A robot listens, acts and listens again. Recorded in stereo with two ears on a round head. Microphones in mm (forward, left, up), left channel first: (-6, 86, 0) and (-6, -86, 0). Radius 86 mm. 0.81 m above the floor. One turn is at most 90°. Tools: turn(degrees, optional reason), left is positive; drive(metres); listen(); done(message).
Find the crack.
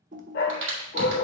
turn(degrees=-70, reason="The crack: about 70° right or 110° right.")
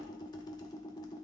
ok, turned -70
listen()
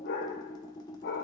done("I heard a crack, but can't make it out now. It was about straight ahead or 40° right.")